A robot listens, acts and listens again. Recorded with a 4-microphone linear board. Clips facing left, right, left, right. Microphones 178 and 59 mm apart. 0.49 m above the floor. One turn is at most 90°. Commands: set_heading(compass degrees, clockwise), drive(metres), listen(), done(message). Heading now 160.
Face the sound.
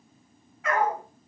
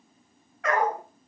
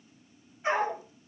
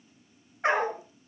set_heading(250)
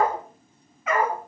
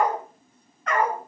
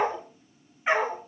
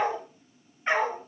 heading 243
done("Facing the dog barking, 2 to 4 m away.")